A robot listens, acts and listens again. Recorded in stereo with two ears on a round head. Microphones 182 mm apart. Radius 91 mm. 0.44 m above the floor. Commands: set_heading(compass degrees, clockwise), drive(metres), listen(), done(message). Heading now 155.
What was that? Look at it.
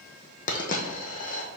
set_heading(115)
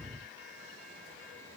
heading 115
listen()
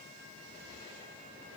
done("I heard a dropped coin, but can't make it out now. It was about straight ahead or 100° left.")